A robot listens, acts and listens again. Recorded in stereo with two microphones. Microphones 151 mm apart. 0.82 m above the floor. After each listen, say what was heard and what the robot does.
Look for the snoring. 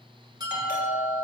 Keep listening.
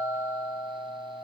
Keep listening.
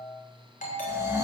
The snoring: about 20° right or 160° right. Turn 20° right.
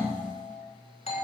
Keep listening.
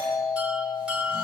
Keep listening.
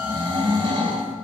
So it is at 140° right. Turn 140° right.
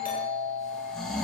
Found it: snoring, straight ahead.